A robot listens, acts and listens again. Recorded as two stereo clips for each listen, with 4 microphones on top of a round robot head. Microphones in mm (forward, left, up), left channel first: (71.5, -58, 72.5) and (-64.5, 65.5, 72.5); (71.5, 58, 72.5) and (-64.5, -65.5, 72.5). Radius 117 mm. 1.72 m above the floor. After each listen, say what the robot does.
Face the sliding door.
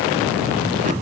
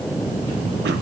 Keep listening.
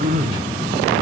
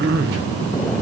Keep listening.
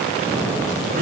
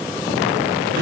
I can't make out a sliding door, only throat clearing.